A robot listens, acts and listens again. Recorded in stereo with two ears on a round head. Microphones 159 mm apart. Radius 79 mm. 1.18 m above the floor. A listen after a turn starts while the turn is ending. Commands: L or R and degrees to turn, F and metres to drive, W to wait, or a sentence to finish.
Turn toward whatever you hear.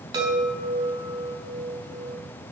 R20
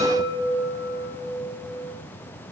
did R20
Found it: a chime, straight ahead.